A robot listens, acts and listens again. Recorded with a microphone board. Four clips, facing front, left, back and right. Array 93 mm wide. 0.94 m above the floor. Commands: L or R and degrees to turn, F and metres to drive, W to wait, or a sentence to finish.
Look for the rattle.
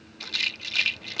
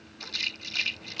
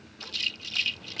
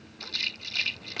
Found it: a rattle, straight ahead.